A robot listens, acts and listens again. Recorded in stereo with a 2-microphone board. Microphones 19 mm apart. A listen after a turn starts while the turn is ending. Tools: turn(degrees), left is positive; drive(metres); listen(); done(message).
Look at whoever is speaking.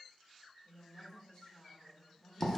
turn(degrees=65)
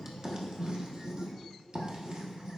listen()
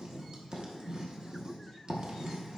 listen()
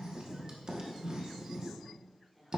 turn(degrees=10)
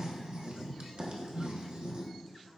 listen()
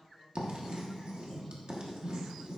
listen()
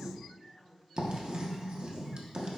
done("Found it: a woman speaking, straight ahead.")